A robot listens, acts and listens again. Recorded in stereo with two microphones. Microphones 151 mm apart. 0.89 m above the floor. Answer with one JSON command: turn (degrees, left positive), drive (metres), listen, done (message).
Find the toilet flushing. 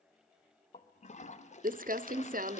{"turn": 50}
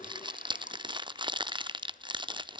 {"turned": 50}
{"listen": true}
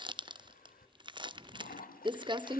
{"turn": 75}
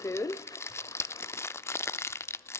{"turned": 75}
{"turn": 25}
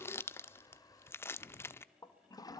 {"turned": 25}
{"turn": 25}
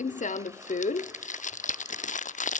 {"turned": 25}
{"listen": true}
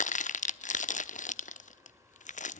{"listen": true}
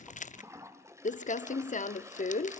{"turn": -20}
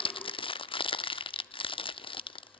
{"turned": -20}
{"listen": true}
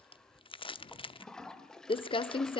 {"done": "Found it: a toilet flushing, straight ahead, 1 to 2 m away."}